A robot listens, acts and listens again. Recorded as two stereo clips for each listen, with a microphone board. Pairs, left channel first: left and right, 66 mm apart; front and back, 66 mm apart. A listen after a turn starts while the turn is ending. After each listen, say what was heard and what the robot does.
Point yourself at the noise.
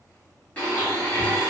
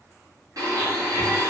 The blender: 160° left. Turn 160° left.
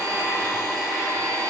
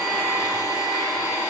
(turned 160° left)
The blender is now 10° left. Turn 10° left.
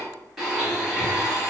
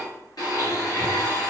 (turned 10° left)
Facing the blender, 1 to 2 m away.